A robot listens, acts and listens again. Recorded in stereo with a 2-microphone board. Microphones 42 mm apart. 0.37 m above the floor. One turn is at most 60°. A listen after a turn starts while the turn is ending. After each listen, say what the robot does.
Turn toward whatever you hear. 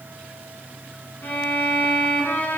Turn 60° left.
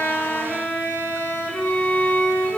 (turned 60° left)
Turn 35° left.
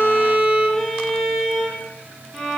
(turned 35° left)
Facing the violin.